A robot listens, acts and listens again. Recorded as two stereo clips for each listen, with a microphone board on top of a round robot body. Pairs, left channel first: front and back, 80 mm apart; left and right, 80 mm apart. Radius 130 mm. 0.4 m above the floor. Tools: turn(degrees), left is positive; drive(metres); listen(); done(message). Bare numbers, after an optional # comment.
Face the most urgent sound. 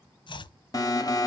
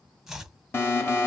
# The alarm: 35° left.
turn(35)
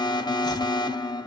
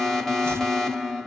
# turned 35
done("Facing the alarm.")